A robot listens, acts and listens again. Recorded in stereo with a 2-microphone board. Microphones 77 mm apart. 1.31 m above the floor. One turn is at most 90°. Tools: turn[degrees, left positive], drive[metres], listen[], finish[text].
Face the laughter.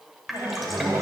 Thought: The laughter: about 35° right or 145° right.
Action: turn[-35]
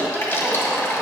Action: finish[Found it: laughter, straight ahead.]